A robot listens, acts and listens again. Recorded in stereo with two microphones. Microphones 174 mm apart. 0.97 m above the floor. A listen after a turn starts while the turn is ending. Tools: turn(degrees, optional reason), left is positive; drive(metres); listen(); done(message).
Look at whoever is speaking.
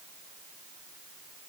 listen()
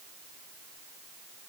listen()
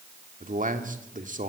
turn(degrees=-50, reason="The man speaking: about 50° right or 130° right.")
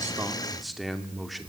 done("Facing the man speaking, 2 to 4 m away.")